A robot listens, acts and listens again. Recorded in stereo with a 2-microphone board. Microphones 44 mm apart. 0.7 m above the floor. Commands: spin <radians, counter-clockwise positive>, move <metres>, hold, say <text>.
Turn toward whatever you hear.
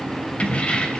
spin 0.44
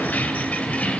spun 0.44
spin 0.61
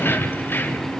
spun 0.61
spin 2.18
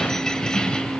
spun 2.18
spin 0.35
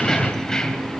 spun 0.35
spin 0.26
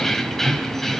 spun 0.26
spin 0.17
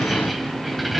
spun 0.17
say Facing the keys jangling, 2 to 4 m away.